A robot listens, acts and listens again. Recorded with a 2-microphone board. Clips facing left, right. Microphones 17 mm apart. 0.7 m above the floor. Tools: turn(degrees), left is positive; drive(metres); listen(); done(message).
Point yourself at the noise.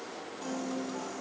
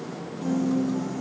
turn(degrees=15)
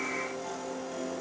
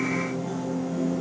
turn(degrees=150)
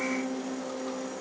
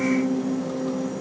turn(degrees=15)
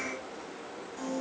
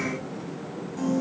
done("Facing the piano, 2 to 4 m away.")